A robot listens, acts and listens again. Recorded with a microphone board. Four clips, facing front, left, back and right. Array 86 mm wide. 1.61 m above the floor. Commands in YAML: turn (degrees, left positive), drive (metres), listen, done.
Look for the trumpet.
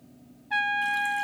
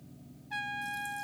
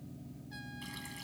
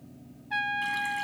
turn: -20
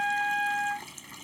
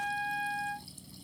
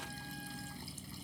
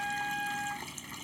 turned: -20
done: "Facing the trumpet."